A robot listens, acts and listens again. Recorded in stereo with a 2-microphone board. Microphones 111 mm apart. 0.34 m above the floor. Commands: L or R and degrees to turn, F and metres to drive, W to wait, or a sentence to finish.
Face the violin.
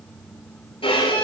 L55
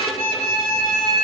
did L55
L70
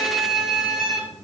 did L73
Facing the violin.